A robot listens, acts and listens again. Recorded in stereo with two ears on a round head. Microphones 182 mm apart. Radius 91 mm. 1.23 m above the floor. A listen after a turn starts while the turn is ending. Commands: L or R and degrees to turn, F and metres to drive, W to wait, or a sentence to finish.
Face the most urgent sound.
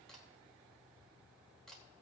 W
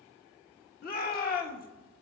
L45
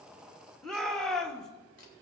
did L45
Facing the shout, 1 to 2 m away.